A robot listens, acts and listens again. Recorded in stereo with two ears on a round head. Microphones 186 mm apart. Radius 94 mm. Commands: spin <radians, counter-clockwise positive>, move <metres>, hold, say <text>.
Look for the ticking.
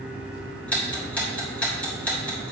spin 0.52
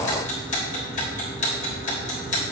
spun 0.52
spin 2.53
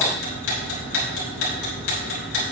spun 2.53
spin 1.13
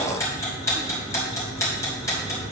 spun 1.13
spin 0.26
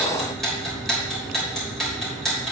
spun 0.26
say Found it: ticking, straight ahead, 2 to 4 m away.